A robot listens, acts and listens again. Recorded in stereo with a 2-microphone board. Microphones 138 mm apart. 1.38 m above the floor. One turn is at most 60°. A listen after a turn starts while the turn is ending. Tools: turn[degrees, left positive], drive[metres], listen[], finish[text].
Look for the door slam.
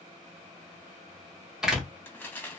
Action: turn[-30]
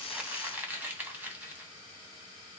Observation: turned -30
Action: listen[]
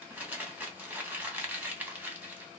Action: finish[I heard a door slam, but can't make it out now. It was about 25° left or 145° right.]